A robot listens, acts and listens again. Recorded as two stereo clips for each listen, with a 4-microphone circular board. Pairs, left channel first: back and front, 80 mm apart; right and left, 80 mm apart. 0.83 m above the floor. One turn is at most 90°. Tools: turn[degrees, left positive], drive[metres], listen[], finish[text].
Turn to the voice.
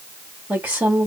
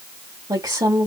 Thought: The woman speaking: 70° left.
Action: turn[70]
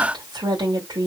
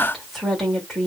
Action: finish[Facing the woman speaking, 1 to 2 m away.]